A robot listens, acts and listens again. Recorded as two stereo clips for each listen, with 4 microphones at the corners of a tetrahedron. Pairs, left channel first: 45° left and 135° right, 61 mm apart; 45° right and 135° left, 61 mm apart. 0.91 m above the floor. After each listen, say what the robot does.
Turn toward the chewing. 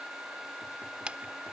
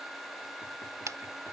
Turn 155° left.
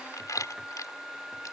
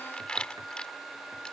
Turn 30° left.
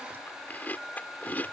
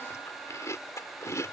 Turn 15° right.
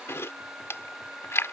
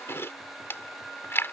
Facing the chewing.